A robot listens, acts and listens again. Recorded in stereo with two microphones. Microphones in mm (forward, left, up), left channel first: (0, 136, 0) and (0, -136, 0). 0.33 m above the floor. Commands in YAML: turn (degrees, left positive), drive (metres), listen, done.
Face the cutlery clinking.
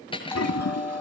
turn: 20
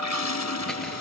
listen: true
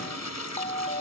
listen: true
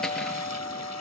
done: "I heard cutlery clinking, but can't make it out now. It was about straight ahead or 140° left."